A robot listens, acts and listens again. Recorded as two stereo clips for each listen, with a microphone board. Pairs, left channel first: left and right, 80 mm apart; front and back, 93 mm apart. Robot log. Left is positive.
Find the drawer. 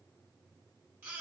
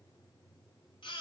cmd idle
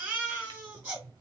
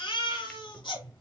note: The drawer: 75° right.
cmd yaw -75
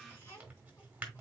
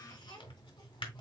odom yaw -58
note: The drawer is now 15° right.
cmd yaw -15
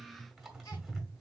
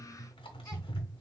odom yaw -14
end: Facing the drawer.